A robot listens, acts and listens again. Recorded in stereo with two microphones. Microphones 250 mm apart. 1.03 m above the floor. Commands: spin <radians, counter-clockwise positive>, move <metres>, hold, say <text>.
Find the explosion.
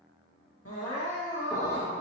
spin 0.52
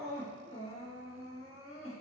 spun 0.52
hold
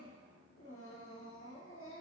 say I heard an explosion, but can't make it out now. It was about 15° right or 135° left.